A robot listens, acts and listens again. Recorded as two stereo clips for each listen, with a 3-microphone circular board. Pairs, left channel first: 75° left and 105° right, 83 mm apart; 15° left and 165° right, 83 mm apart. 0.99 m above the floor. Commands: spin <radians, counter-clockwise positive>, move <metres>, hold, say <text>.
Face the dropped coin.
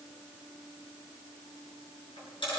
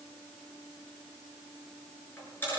spin 1.40
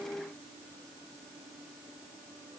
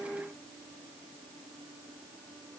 say Facing where the dropped coin came from. I can't hear it now.